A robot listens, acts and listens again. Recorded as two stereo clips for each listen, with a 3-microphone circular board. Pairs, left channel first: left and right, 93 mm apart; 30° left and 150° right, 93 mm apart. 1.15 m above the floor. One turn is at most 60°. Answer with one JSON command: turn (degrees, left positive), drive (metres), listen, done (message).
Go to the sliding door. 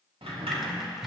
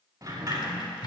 {"turn": -60}
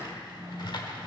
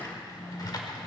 {"turn": -30}
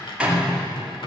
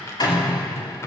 {"turn": -10}
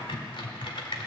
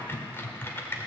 {"listen": true}
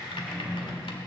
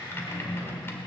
{"drive": 1.0}
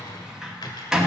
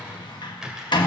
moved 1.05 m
{"drive": 1.0}
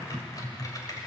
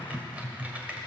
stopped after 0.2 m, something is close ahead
{"listen": true}
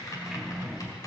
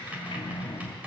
{"done": "I am next to the sliding door."}